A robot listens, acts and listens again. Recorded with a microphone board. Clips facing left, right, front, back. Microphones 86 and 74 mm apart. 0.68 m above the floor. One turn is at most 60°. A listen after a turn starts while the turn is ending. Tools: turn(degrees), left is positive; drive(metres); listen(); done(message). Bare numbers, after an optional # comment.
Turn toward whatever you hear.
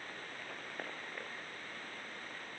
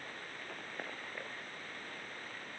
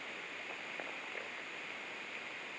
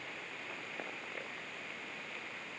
listen()
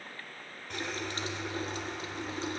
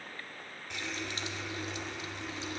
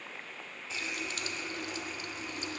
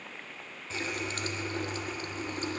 # The running tap: 135° left.
turn(60)
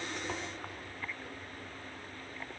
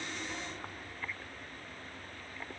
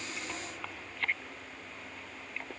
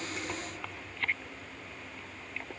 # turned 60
# The running tap is now 90° left.
turn(60)
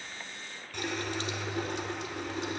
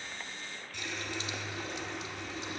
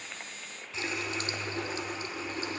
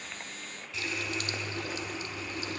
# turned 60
# The running tap is now 60° left.
turn(60)
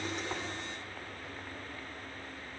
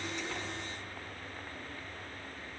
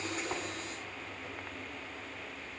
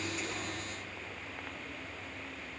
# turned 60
# The running tap is now 15° left.
turn(15)
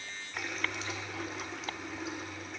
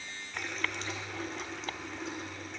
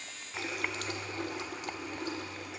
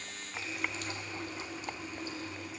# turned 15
done("Found it: a running tap, straight ahead, 1 to 2 m away.")